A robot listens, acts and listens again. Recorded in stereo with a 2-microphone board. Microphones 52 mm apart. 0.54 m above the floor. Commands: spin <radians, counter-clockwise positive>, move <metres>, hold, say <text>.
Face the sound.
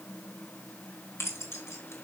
spin 1.05
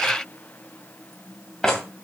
spin 0.17
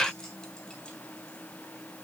hold
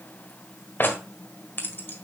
spin 0.70
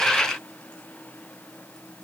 hold
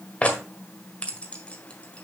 spin 0.44
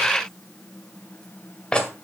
spin 0.35
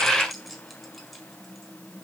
hold
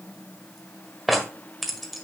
say Found it: keys jangling, straight ahead.